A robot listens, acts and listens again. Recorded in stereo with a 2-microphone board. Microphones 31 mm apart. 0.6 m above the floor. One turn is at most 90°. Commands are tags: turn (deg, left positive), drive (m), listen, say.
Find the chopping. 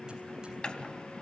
<turn deg="35"/>
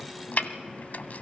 <turn deg="90"/>
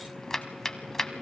<turn deg="15"/>
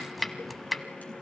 <say>Facing the chopping, under 1 m away.</say>